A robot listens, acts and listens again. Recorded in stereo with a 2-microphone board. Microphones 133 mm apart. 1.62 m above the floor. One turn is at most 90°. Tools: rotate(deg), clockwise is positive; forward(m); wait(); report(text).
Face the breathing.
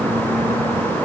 wait()
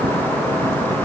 wait()
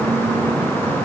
report("I can't make out breathing.")